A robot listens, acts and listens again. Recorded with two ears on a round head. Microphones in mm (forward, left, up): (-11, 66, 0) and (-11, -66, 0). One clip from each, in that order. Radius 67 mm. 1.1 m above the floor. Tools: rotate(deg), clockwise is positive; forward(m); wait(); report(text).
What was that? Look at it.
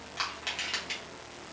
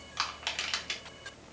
rotate(20)
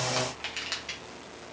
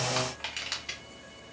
report("Facing the crushing.")